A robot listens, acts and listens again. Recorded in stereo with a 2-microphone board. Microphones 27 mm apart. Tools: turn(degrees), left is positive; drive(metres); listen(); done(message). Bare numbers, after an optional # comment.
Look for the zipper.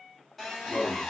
listen()
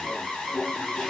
listen()
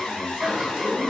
# The zipper: about 20° right or 160° right.
turn(-20)
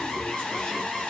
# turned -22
listen()
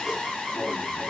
listen()
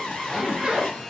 # So it is at 135° right.
turn(-135)
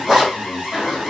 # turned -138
done("Found it: a zipper, straight ahead.")